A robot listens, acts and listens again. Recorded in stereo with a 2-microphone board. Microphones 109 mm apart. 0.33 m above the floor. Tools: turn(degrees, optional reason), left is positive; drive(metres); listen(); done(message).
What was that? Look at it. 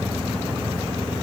listen()
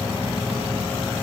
listen()
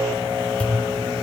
turn(degrees=30)
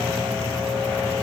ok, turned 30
listen()
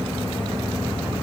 done("I heard a pop, but can't make it out now. It was about 20° right or 140° left.")